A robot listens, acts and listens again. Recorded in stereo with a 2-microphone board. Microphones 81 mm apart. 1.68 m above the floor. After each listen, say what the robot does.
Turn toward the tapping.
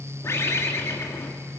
Keep listening.
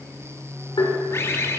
Turn 75° left.
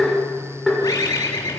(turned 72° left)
Facing the tapping, over 4 m away.